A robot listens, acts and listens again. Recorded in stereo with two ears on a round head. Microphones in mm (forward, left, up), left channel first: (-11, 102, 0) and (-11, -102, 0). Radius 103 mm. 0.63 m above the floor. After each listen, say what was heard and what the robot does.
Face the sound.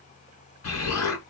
Turn 90° left.
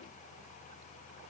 Facing where the explosion came from. I can't hear it now.